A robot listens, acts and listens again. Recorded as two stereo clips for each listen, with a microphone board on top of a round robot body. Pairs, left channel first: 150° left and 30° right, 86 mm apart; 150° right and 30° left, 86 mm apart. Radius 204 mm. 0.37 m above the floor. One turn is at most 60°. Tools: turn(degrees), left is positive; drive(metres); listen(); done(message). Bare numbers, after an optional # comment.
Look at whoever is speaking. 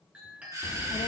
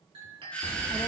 # The child speaking: 140° left.
turn(60)
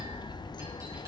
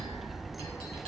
# The child speaking is now 120° left.
turn(60)
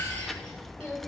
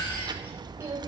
# The child speaking is now 65° left.
turn(60)
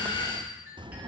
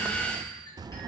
done("Found it: a child speaking, straight ahead.")